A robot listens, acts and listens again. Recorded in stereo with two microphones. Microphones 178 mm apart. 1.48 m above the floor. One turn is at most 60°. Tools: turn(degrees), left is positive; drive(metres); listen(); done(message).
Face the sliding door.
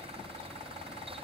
listen()
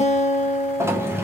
turn(degrees=-30)
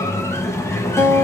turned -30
turn(degrees=15)
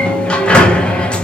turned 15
done("Facing the sliding door, under 1 m away.")